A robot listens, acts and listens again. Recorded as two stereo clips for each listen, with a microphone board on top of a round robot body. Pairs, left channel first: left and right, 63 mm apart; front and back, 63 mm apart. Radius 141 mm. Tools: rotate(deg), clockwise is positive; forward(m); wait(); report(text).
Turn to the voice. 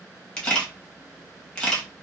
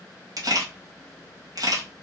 wait()
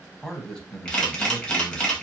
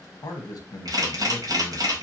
rotate(-15)
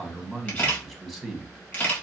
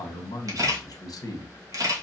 report("Found it: a man speaking, straight ahead, 1 to 2 m away.")